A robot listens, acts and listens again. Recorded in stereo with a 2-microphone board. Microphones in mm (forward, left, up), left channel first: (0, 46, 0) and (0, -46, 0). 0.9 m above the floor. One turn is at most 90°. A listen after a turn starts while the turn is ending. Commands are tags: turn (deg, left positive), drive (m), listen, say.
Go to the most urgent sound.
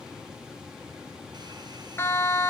<turn deg="25"/>
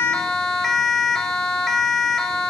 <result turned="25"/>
<drive m="1.0"/>
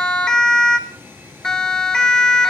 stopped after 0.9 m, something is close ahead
<turn deg="10"/>
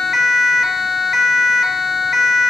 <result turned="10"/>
<say>Arrived at the siren, straight ahead.</say>